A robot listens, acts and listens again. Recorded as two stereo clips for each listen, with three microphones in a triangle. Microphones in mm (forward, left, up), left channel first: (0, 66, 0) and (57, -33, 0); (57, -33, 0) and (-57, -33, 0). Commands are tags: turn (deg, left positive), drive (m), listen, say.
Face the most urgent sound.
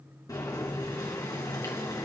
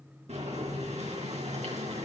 <listen/>
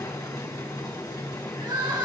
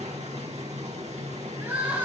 <turn deg="-110"/>
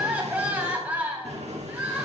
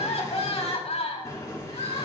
<turn deg="15"/>
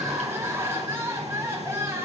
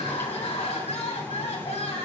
<say>Facing the crying, 2 to 4 m away.</say>